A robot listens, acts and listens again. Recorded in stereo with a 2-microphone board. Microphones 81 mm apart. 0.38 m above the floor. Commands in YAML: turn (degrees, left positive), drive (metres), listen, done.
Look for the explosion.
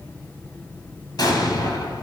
turn: 55
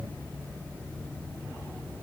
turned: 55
listen: true
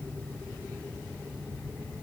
done: "I heard an explosion, but can't make it out now. It was about straight ahead or 70° left."